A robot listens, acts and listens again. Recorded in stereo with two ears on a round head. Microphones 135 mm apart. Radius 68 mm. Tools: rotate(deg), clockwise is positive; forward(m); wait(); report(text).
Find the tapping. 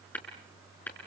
rotate(-30)
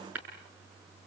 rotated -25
rotate(15)
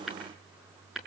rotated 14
report("Facing the tapping, over 4 m away.")